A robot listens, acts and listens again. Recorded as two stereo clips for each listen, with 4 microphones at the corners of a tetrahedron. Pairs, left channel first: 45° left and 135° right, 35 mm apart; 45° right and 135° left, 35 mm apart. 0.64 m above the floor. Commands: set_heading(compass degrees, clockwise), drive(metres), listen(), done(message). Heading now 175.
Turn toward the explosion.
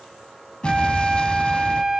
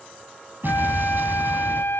set_heading(70)
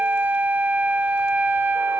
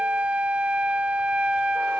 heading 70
done("I heard an explosion from this way, but can't make it out now.")